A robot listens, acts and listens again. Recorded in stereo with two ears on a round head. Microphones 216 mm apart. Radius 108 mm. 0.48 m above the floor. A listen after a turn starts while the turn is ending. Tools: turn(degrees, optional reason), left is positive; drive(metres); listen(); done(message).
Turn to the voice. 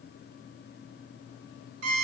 listen()
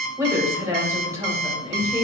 turn(degrees=-30)
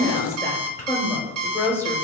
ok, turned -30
turn(degrees=15, reason="So it is at 15° left.")
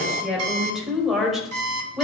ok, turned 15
done("Facing the woman speaking, 2 to 4 m away.")